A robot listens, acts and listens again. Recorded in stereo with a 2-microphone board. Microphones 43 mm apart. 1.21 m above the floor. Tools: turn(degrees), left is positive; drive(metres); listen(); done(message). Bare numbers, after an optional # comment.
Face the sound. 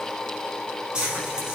# The frying: about 25° right or 155° right.
turn(-25)
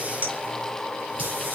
# So it is at 130° right.
turn(-130)
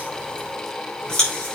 # The frying is now 25° left.
turn(25)
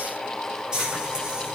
# The frying is now 15° right.
turn(-15)
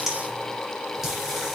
done("Found it: frying, straight ahead, over 4 m away.")